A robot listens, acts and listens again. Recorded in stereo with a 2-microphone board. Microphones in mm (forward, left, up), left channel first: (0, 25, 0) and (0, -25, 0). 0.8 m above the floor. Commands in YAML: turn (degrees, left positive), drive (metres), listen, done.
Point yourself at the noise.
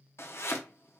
turn: 60
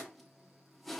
done: "Found it: chopping, straight ahead, under 1 m away."